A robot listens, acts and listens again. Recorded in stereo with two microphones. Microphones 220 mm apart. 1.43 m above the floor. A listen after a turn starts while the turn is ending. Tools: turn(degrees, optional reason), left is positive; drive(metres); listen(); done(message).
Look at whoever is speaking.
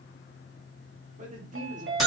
turn(degrees=-35, reason="The man speaking: about 35° right or 145° right.")
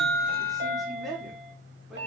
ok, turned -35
done("Facing the man speaking.")